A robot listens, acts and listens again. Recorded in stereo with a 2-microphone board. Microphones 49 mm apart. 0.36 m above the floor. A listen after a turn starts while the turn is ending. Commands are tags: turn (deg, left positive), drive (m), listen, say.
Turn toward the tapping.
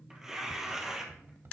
<turn deg="-50"/>
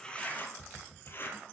<turn deg="-10"/>
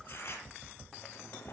<say>Facing the tapping.</say>